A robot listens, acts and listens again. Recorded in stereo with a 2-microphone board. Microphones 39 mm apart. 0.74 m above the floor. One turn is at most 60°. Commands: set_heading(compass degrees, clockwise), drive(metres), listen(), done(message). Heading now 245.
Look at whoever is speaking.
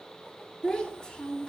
set_heading(225)
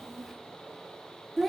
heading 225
done("Facing the child speaking.")